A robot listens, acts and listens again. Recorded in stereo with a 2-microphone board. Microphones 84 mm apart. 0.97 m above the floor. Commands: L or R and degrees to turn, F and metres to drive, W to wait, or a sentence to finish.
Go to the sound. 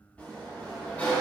L15
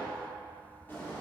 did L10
L25
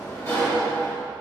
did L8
L145
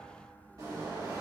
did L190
R45
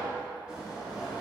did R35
R10
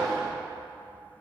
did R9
F1.0
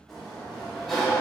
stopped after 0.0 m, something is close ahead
Blocked. The sliding door is further on, straight ahead.